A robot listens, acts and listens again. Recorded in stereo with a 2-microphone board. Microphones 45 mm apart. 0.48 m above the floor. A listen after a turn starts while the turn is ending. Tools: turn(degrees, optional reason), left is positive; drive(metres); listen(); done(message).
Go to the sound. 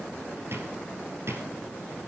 turn(degrees=-60, reason="The drawer: about 60° right or 120° right.")
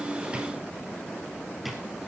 drive(metres=1.0)
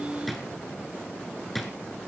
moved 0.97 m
drive(metres=1.0)
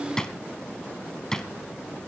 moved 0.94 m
turn(degrees=15, reason="The drawer is now 15° left.")
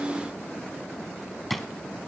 drive(metres=1.0)
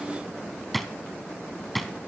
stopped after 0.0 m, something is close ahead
done("I am next to the drawer.")